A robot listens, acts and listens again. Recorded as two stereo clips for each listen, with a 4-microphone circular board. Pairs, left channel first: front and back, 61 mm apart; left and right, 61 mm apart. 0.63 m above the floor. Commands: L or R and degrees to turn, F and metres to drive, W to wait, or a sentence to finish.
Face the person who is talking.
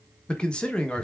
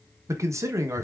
R70
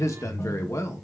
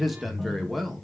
Facing the man speaking.